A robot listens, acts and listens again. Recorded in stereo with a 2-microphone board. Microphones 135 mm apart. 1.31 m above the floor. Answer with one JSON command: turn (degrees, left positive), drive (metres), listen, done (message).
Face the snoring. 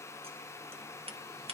{"listen": true}
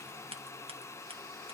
{"listen": true}
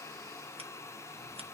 {"done": "I can't make out snoring to turn to."}